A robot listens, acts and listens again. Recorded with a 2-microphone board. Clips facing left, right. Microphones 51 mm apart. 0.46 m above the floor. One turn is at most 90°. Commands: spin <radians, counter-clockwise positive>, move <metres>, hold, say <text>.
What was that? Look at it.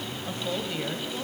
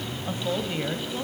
spin -0.26
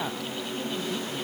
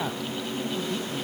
hold
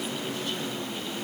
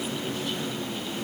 hold
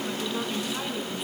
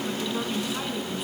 spin 0.52
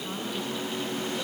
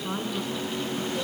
spin -0.52
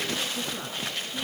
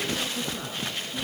say Found it: a woman speaking, straight ahead.